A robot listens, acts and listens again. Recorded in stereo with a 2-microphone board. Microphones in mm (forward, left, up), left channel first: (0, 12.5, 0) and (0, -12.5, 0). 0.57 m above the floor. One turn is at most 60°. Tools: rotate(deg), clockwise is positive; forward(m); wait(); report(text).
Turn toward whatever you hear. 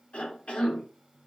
rotate(-55)
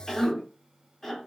rotate(-15)
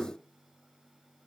rotate(-10)
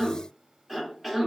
report("Found it: a cough, straight ahead.")